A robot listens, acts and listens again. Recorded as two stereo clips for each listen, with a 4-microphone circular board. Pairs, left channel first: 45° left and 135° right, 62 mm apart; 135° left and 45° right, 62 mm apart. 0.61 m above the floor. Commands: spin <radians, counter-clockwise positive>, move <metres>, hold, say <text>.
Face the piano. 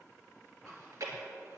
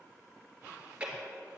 hold
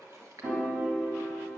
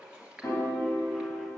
spin 3.14
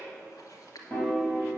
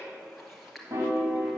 spin -0.35
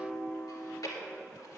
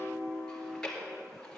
spin -0.17
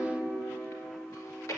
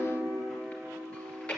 say Found it: a piano, straight ahead.